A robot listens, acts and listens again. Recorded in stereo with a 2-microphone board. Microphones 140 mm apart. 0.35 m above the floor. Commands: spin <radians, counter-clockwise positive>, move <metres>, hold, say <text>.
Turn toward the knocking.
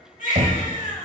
spin -1.05
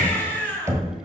spin -0.44
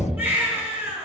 say Facing the knocking.